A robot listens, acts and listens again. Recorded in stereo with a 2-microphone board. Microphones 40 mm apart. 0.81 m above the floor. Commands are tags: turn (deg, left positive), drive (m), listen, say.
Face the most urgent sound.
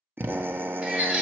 <turn deg="-30"/>
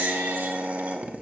<turn deg="-120"/>
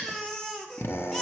<turn deg="15"/>
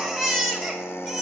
<say>Found it: a baby crying, straight ahead.</say>